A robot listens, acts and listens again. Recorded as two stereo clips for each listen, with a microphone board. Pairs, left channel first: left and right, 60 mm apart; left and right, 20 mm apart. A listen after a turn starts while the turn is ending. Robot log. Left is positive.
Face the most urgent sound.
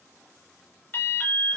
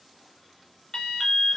note: The alarm: about 30° left or 150° left.
cmd yaw +30
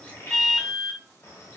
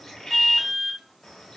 end: Facing the alarm, under 1 m away.